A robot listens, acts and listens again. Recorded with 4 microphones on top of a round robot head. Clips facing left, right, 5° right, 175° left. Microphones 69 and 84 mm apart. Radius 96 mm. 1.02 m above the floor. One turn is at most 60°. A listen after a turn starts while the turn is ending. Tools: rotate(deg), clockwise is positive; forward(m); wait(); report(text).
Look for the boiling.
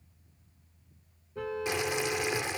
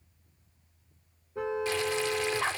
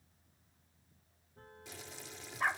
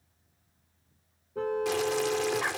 rotate(-60)
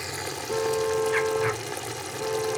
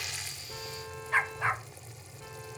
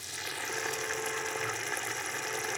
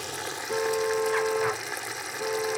rotate(-60)
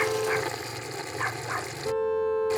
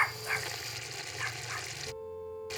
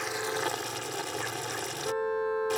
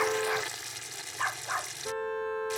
rotate(-30)
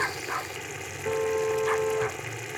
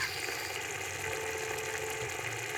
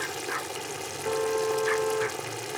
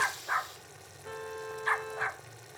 report("Facing the boiling.")